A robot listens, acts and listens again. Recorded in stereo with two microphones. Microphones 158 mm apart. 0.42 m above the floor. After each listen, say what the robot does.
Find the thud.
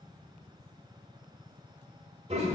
Keep listening.
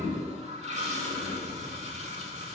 Keep listening.
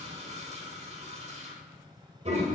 I can't make out a thud to turn to.